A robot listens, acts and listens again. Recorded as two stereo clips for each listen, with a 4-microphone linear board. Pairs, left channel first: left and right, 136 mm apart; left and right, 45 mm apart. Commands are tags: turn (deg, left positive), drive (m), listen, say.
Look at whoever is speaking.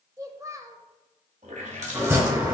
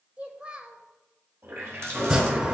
<turn deg="-25"/>
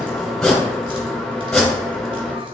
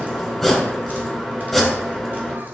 <listen/>
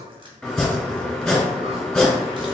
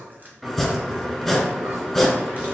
<listen/>
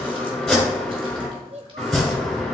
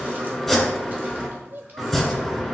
<turn deg="-130"/>
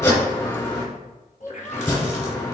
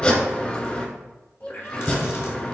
<turn deg="20"/>
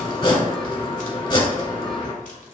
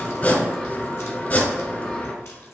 <listen/>
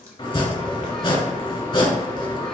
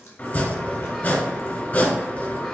<listen/>
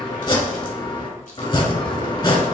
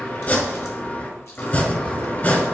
<say>I heard a child speaking from this way, but can't make it out now.</say>